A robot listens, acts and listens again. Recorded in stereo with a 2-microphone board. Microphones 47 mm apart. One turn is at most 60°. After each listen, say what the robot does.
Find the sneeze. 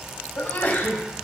Turn 55° left.
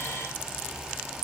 Keep listening.
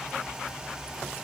I heard a sneeze, but can't make it out now. It was about straight ahead or 70° left.